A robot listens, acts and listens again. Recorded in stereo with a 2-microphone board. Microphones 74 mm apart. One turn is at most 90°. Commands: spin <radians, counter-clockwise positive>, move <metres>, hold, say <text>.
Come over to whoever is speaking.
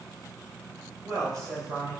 spin -1.13
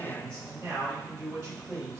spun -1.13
spin -0.79
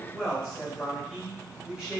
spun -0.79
spin -0.26
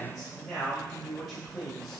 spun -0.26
move 1.0
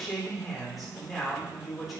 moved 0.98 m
move 1.0
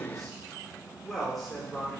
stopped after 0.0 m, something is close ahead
say I am next to the man speaking.